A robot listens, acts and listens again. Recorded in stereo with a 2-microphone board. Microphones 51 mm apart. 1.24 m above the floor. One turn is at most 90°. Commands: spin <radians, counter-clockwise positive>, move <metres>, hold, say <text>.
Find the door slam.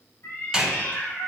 spin -0.52
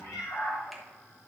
hold
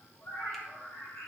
say I heard a door slam, but can't make it out now. It was about 15° left or 135° right.